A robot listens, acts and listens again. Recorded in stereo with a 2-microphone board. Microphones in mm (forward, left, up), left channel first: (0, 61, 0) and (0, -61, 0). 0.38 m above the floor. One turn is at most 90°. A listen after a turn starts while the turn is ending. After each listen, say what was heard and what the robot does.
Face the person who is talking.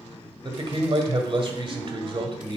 The man speaking: about 45° right or 135° right. Turn 45° right.
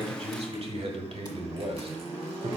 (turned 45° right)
So it is at 85° right. Turn 85° right.
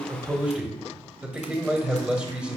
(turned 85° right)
The man speaking is now 10° right. Turn 10° right.
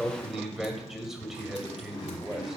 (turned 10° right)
Found it: a man speaking, straight ahead, 1 to 2 m away.